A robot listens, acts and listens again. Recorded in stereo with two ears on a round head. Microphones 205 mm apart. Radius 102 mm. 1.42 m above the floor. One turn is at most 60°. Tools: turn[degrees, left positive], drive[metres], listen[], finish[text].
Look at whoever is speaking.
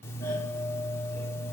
Action: listen[]
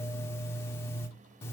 Action: listen[]
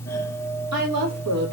Action: turn[-60]
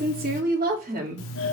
Thought: So it is at 40° right.
Action: turn[-40]
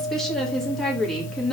Action: finish[Facing the woman speaking, 2 to 4 m away.]